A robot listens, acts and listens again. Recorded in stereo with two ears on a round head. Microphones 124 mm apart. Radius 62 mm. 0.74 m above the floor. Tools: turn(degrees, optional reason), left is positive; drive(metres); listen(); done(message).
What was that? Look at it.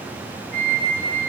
turn(degrees=50, reason="The flute: about 50° left or 130° left.")
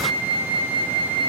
turn(degrees=80, reason="So it is at 80° left.")
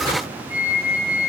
turn(degrees=-10, reason="The flute is now 10° right.")
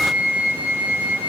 done("Found it: a flute, straight ahead, over 4 m away.")